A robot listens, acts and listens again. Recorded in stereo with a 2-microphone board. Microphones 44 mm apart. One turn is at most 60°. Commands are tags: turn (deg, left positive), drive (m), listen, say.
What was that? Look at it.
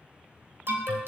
<turn deg="-55"/>
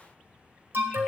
<turn deg="-60"/>
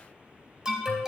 <turn deg="-15"/>
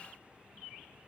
<listen/>
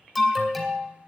<say>Found it: an alarm, straight ahead, 2 to 4 m away.</say>